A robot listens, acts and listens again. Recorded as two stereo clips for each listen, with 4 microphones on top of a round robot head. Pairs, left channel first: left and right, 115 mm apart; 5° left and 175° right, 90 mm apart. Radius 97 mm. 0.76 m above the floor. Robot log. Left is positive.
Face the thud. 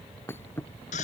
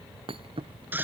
note: The thud: 165° left.
cmd yaw +165
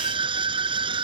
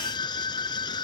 end: Facing where the thud came from. I can't hear it now.